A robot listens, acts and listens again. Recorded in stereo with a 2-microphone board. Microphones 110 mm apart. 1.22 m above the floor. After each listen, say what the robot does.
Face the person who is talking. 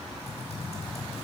Keep listening.
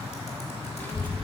Turn 15° left.
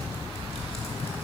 Turn 145° left.
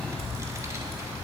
Turn 30° right.
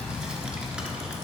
Turn 10° right.
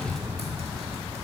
Facing the child speaking.